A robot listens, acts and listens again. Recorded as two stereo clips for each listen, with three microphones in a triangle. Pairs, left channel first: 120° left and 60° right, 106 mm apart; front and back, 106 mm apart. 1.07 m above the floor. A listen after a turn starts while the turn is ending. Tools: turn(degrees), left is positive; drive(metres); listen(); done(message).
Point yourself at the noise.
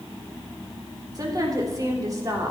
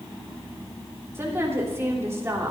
turn(degrees=-115)
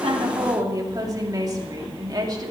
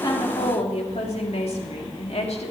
turn(degrees=-10)
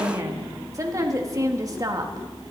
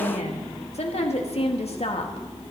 done("Found it: a woman speaking, straight ahead.")